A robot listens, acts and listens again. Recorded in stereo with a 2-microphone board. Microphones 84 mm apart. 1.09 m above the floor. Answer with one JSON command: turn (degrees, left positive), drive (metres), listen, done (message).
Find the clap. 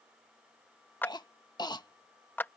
{"turn": 25}
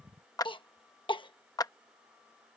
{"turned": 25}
{"turn": 130}
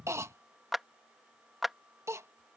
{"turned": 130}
{"done": "Facing the clap."}